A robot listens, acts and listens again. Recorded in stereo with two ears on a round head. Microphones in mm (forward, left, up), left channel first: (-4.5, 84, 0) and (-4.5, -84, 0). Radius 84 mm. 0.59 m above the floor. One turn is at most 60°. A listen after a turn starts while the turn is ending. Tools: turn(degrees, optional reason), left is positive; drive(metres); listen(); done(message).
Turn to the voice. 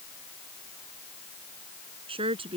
turn(degrees=-30, reason="The woman speaking: about 30° right or 150° right.")
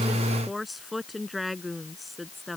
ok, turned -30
done("Found it: a woman speaking, straight ahead.")